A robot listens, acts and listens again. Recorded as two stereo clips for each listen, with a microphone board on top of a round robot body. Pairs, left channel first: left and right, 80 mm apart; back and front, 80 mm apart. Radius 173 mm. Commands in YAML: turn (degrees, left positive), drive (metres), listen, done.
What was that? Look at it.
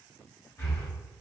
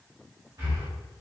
turn: 35
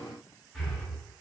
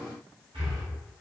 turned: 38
done: "Found it: breathing, straight ahead, 1 to 2 m away."